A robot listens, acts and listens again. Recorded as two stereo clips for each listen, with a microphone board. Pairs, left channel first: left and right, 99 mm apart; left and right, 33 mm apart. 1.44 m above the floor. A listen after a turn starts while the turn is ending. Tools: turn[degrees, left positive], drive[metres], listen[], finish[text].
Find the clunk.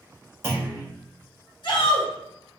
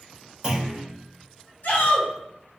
Thought: The clunk: about 25° right or 155° right.
Action: turn[-25]
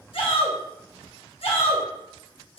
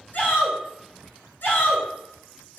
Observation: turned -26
Action: listen[]
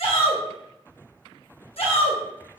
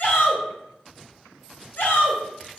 Action: finish[I heard a clunk, but can't make it out now. It was about straight ahead or 130° right.]